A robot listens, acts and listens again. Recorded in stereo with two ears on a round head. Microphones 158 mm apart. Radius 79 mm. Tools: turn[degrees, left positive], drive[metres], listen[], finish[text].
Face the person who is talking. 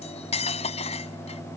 Action: listen[]
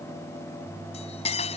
Action: listen[]
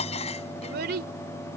Thought: The child speaking: about 60° right or 120° right.
Action: turn[-60]
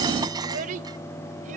Thought: So it is at 50° right.
Action: turn[-50]
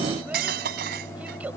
Action: listen[]
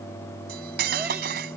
Action: listen[]
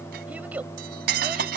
Thought: The child speaking is now 10° right.
Action: turn[-10]
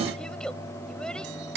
Action: listen[]
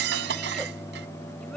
Action: listen[]
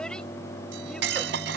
Action: finish[I heard a child speaking from this way, but can't make it out now.]